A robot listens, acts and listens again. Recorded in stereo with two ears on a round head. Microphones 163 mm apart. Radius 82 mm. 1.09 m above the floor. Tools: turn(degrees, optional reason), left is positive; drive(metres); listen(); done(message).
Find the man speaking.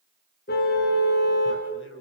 turn(degrees=90)
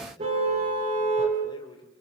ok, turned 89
turn(degrees=25, reason="So it is at 25° left.")
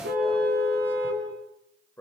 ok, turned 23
turn(degrees=15, reason="The man speaking is now 15° left.")
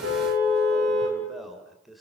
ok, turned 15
done("Found it: a man speaking, straight ahead.")